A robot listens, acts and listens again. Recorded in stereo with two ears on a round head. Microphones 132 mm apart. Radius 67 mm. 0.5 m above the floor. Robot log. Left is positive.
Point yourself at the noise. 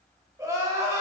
note: The crying: about 20° right or 160° right.
cmd yaw -20
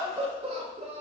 note: So it is at 140° right.
cmd yaw -140
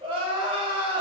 note: The crying is now 35° right.
cmd yaw -35
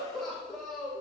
end: Found it: crying, straight ahead.